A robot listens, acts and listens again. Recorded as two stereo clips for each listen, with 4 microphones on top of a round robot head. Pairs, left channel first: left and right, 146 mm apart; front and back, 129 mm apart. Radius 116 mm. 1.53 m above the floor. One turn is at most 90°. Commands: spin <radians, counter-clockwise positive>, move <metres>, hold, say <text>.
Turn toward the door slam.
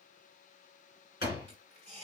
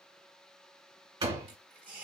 spin 1.57
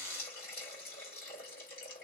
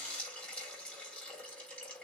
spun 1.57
spin 0.79
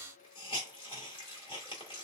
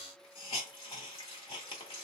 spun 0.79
say I heard a door slam from this way, but can't make it out now.